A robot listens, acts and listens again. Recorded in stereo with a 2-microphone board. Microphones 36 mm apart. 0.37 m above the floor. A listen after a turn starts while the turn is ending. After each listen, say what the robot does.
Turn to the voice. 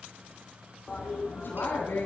Turn 70° left.
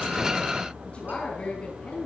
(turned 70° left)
Turn 35° left.
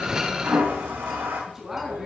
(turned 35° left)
Facing the woman speaking, 2 to 4 m away.